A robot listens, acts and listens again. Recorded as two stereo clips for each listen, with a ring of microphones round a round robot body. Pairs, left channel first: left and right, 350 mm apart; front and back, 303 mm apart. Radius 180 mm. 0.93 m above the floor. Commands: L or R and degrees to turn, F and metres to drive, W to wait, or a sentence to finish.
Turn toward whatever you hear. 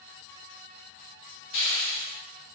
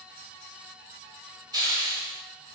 L105
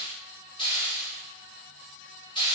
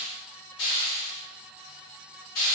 L15
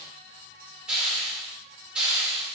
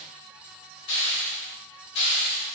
Facing the hiss.